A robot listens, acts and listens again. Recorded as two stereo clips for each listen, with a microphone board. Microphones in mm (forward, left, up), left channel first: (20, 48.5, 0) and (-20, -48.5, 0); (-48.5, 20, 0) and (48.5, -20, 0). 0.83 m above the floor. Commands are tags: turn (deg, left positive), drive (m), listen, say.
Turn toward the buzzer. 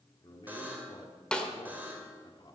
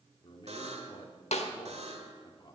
<turn deg="-40"/>
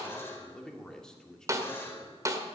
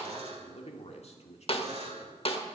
<say>Facing the buzzer.</say>